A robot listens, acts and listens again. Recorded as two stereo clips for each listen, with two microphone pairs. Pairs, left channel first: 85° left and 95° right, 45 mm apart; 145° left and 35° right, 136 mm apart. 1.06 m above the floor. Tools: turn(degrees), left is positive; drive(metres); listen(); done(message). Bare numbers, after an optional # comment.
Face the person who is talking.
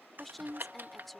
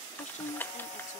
# The woman speaking: 170° left.
turn(170)
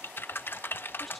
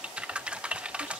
done("Found it: a woman speaking, straight ahead.")